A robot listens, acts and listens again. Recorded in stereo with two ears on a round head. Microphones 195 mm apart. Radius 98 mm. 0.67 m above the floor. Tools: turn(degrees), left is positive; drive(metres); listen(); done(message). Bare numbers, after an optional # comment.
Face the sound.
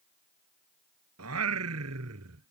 turn(-90)
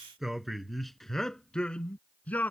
# So it is at 10° left.
turn(10)
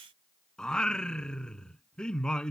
done("Found it: singing, straight ahead.")